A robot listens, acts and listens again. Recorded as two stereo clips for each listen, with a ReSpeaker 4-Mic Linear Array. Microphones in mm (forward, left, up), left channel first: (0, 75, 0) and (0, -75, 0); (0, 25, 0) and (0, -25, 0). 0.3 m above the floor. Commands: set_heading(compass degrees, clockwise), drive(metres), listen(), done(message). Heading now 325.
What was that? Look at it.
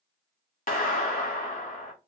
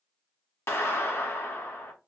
set_heading(260)
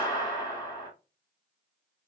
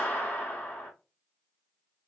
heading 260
set_heading(230)
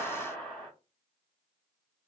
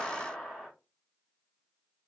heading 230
done("Facing the clap, 1 to 2 m away.")